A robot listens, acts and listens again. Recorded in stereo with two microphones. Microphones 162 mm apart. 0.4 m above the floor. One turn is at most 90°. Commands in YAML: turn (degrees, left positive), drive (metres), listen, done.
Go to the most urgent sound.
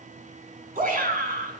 turn: -60
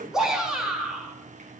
drive: 1.0
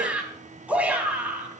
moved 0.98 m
turn: -10
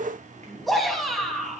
drive: 1.0
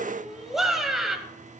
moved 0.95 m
drive: 1.0
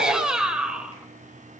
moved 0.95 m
drive: 1.0
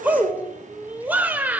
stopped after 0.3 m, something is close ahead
turn: -15
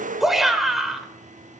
done: "I am next to the shout."